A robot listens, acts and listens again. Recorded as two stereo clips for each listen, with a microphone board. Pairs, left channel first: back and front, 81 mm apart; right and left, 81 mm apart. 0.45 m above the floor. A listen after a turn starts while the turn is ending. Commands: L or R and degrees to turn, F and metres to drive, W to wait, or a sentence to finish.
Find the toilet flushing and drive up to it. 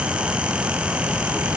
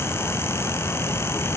W
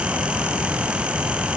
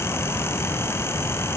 W
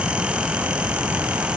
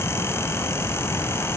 I can't make out a toilet flushing.